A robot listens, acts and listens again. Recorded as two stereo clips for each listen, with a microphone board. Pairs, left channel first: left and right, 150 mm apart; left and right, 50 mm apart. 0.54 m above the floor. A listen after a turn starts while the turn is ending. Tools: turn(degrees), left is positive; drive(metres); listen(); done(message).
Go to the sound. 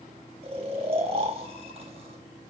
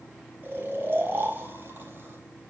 turn(degrees=-40)
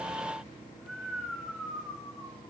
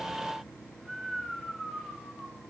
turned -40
drive(metres=1.0)
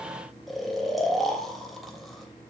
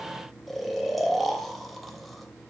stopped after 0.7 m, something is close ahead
done("Something is in my way. I am facing the snoring but have not reached it.")